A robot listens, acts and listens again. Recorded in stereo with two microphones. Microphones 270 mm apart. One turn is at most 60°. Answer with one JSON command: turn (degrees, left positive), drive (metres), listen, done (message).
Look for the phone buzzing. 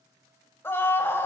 {"listen": true}
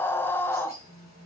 {"turn": -30}
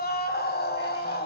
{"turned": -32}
{"listen": true}
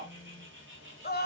{"done": "Facing the phone buzzing, over 4 m away."}